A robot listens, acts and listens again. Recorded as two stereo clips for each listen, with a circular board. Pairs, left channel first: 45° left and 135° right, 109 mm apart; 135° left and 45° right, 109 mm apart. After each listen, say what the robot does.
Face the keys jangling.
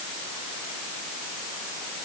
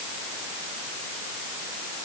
Keep listening.
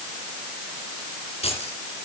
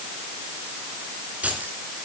Turn 30° left.
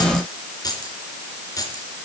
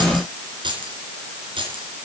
Turn 10° right.
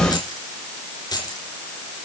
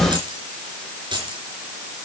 Facing the keys jangling, 2 to 4 m away.